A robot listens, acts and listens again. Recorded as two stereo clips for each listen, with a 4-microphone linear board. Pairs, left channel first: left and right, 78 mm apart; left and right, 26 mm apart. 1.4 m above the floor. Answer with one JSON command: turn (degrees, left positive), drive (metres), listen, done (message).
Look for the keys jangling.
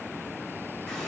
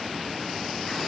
{"listen": true}
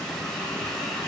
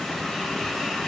{"listen": true}
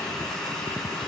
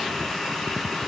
{"done": "I can't make out keys jangling to turn to."}